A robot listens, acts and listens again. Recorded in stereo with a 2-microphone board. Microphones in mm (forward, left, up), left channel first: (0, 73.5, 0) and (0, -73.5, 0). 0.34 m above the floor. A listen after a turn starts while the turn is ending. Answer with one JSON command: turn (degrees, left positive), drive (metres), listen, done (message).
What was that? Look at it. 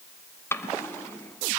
{"turn": 15}
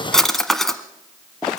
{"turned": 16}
{"done": "Found it: a drawer, straight ahead, 1 to 2 m away."}